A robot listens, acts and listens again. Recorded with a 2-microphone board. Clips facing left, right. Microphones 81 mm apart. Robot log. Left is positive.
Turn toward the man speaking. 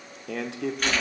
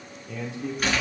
note: The man speaking: about 70° left or 110° left.
cmd yaw +70
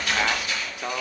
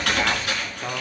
note: So it is at 10° left.
cmd yaw +10
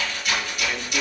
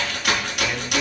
cmd idle
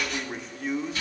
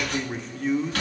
end: Facing the man speaking, 1 to 2 m away.